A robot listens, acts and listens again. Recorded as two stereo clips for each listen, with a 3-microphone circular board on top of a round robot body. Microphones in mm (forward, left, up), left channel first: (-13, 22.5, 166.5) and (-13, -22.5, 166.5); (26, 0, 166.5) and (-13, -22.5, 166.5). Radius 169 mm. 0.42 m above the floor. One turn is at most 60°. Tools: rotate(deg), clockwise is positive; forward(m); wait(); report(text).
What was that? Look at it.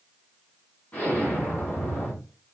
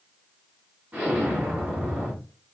rotate(-60)
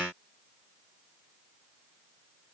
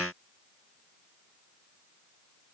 rotate(-60)
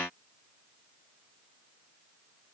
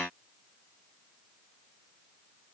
rotate(-30)
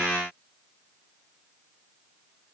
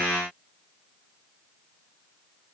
report("I heard an explosion from this way, but can't make it out now.")